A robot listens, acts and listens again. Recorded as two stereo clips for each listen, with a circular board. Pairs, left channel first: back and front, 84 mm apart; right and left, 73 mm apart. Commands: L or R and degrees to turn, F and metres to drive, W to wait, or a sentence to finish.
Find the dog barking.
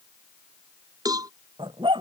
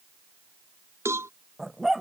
Found it: a dog barking, straight ahead.